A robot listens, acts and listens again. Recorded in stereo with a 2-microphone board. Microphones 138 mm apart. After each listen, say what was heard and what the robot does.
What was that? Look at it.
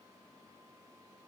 Keep listening.
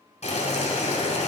The boiling: about 55° left or 125° left. Turn 55° left.
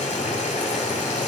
So it is at 65° left. Turn 65° left.
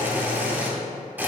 The boiling is now 15° right. Turn 15° right.
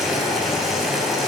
Found it: boiling, straight ahead.